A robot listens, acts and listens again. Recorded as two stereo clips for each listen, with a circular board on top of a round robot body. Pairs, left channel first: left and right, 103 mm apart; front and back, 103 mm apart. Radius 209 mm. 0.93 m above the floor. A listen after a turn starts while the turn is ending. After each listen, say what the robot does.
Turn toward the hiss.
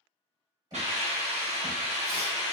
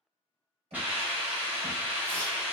Turn 105° right.
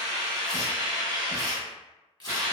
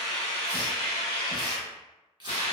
Turn 35° right.
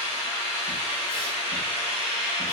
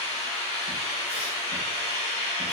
Found it: a hiss, straight ahead.